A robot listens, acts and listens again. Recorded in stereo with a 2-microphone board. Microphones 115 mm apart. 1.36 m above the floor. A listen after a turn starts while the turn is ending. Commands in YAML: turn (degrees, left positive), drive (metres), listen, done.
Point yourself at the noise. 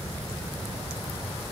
listen: true
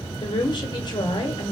turn: 40
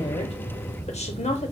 turn: 95
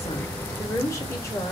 turn: 25
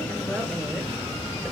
listen: true
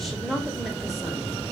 done: "Found it: a woman speaking, straight ahead."